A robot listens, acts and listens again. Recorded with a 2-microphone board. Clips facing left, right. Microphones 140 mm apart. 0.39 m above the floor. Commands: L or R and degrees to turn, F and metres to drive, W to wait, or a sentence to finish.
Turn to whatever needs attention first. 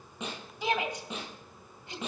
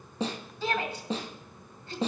L15
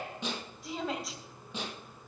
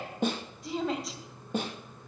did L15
Found it: a shout, straight ahead.